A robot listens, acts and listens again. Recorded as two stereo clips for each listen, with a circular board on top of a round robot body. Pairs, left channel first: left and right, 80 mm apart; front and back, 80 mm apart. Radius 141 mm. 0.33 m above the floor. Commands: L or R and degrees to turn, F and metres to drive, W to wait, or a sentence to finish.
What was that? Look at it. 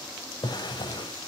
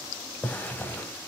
L70
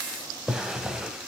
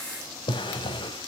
R10
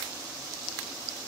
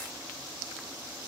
W
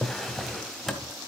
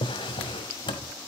Found it: a drawer, straight ahead.